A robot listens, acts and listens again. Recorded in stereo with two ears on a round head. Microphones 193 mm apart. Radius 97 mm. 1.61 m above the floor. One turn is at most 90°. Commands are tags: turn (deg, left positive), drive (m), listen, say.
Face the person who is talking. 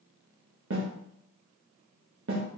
<listen/>
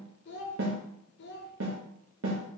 <turn deg="55"/>
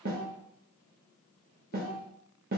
<turn deg="50"/>
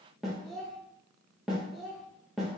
<say>Facing the child speaking, under 1 m away.</say>